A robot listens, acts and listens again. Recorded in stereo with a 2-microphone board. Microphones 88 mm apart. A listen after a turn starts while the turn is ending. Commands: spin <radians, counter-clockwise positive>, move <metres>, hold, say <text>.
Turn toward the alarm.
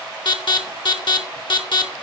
spin 1.13
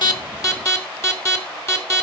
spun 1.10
spin 0.61
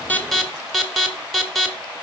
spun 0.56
say Found it: an alarm, straight ahead, 1 to 2 m away.